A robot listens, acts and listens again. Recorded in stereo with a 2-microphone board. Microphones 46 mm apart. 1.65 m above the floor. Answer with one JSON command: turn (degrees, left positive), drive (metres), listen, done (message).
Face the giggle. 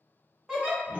{"turn": -30}
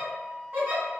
{"turn": -130}
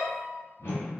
{"listen": true}
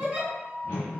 {"turn": -30}
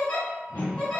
{"turn": 20}
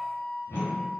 {"listen": true}
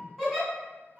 {"done": "Found it: a giggle, straight ahead, 1 to 2 m away."}